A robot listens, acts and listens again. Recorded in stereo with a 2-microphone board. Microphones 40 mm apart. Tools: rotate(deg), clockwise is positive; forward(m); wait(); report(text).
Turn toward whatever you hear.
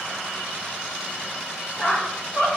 rotate(-40)
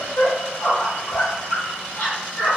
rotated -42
rotate(-90)
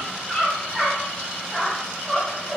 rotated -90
report("Found it: a squeak, straight ahead, 2 to 4 m away.")